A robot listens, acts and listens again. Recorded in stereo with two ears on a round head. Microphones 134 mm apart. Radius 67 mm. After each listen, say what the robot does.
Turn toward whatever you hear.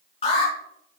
Turn 40° left.
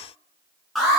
Facing the alarm.